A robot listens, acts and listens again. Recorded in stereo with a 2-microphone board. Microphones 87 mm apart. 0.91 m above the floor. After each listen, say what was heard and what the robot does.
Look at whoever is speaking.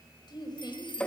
The woman speaking: about 60° left or 120° left. Turn 60° left.
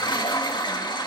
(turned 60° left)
Keep listening.
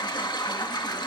Keep listening.
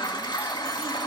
I heard a woman speaking, but can't make it out now. It was about straight ahead or 60° left.